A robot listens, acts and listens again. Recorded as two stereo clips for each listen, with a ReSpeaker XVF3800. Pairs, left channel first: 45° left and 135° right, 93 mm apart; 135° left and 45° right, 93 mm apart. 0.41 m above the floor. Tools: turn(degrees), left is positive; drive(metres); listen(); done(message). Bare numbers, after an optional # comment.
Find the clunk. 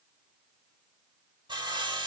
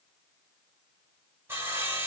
listen()
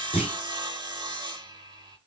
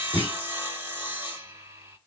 # The clunk: 25° left.
turn(25)
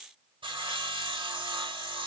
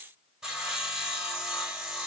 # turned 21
done("Facing where the clunk came from. I can't hear it now.")